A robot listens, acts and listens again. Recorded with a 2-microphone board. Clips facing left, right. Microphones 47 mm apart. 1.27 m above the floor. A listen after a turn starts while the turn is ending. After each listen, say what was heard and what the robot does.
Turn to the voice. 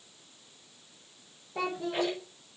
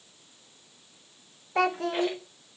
The child speaking: about 70° right or 110° right. Turn 70° right.
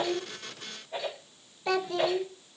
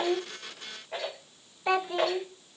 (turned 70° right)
So it is at 20° right. Turn 20° right.
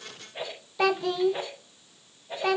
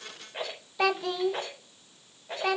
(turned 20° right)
Facing the child speaking, under 1 m away.